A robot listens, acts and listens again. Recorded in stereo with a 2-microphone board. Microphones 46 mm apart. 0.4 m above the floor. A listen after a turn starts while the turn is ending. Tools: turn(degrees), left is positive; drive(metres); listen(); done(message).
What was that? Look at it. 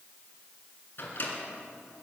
turn(degrees=45)
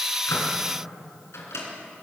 turn(degrees=85)
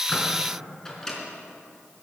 turn(degrees=15)
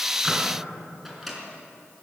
done("Facing the microwave, 2 to 4 m away.")